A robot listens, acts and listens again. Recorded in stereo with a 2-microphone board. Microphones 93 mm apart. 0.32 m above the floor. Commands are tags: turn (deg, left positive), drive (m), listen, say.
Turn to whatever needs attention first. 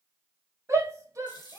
<turn deg="-35"/>
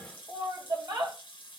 <turn deg="-100"/>
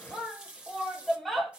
<say>Found it: a shout, straight ahead, 1 to 2 m away.</say>